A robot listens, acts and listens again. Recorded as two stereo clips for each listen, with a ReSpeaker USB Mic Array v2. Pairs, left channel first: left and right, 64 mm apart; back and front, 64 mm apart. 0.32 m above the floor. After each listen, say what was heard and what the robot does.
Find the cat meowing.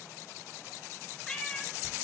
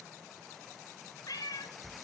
The cat meowing: 170° left. Turn 170° left.
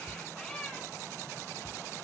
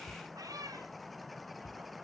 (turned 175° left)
The cat meowing is now 15° left. Turn 15° left.
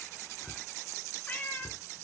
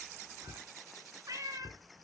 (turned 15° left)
The cat meowing is now 30° left. Turn 30° left.
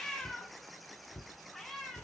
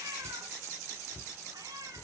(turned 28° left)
Found it: a cat meowing, straight ahead.